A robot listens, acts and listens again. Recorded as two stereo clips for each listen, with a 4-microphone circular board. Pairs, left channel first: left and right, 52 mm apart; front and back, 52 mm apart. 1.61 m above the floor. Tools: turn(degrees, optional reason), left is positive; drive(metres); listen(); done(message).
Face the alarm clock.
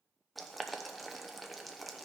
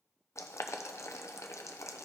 listen()
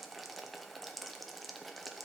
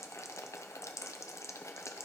listen()
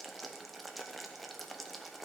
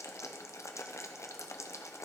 done("I can't make out an alarm clock, only boiling.")